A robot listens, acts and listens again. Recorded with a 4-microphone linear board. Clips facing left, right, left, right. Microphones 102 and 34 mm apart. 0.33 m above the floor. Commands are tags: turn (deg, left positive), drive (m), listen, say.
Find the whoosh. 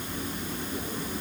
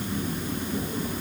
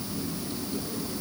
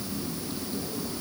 <listen/>
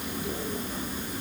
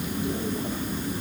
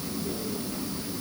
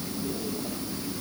<listen/>
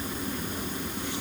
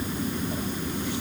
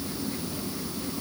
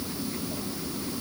<say>I can't make out a whoosh to turn to.</say>